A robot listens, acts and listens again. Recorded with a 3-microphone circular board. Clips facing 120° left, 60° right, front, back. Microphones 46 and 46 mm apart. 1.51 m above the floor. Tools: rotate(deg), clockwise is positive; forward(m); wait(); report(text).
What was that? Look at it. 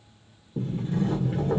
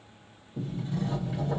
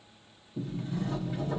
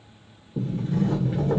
rotate(-155)
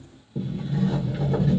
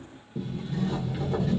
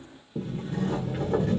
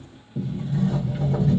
rotate(-30)
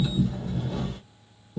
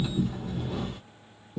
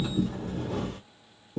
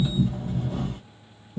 rotate(-15)
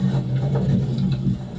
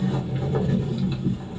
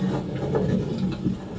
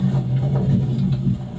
report("Facing the sliding door.")